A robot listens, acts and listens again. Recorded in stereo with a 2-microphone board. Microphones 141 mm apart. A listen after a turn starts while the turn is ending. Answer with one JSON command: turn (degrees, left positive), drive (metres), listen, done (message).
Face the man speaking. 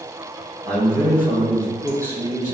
{"turn": 20}
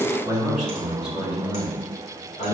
{"turn": 125}
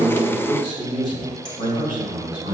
{"turn": 35}
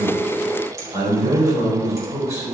{"turn": -20}
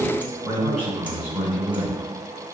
{"turn": -10}
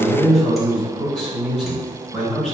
{"done": "Facing the man speaking, 2 to 4 m away."}